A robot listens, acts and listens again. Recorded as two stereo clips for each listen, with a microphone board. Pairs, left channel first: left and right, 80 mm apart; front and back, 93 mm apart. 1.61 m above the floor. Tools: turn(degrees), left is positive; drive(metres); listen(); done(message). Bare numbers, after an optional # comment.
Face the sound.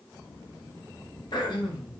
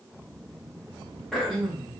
# The throat clearing: 85° left.
turn(85)
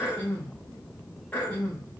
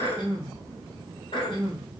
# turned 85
# The throat clearing is now 20° left.
turn(20)
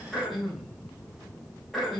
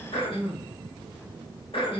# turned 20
done("Facing the throat clearing, 2 to 4 m away.")